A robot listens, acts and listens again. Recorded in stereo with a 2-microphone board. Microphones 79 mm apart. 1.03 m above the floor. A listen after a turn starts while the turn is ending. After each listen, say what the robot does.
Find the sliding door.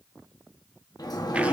Turn 55° left.
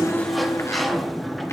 Found it: a sliding door, straight ahead.